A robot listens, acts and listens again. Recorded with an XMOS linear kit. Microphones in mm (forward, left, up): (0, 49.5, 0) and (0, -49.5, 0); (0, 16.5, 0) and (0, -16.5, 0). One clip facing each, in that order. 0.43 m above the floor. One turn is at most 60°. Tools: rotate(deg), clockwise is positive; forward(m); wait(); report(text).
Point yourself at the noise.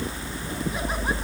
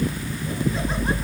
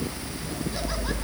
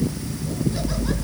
wait()
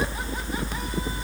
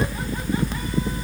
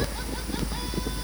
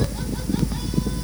wait()
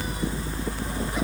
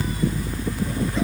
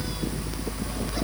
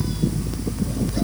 report("I can't make out anything.")